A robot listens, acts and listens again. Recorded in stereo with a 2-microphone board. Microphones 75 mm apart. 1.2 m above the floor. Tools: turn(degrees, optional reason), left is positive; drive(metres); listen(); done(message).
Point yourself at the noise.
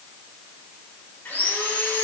turn(degrees=25, reason="The sawing: about 25° left or 155° left.")
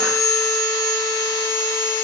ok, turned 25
turn(degrees=130, reason="So it is at 130° left.")
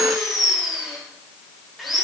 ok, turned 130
done("Facing the sawing.")